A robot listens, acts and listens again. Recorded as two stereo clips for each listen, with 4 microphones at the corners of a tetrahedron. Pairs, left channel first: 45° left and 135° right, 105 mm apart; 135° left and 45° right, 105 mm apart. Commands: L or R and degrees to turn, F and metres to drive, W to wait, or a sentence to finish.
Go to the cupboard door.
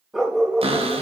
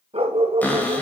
R150
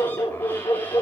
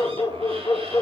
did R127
R25
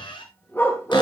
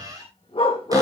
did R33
L10
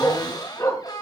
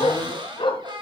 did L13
F1.0
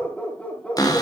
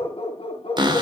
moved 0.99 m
F1.0
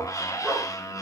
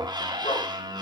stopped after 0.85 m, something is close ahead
Arrived at the cupboard door, straight ahead.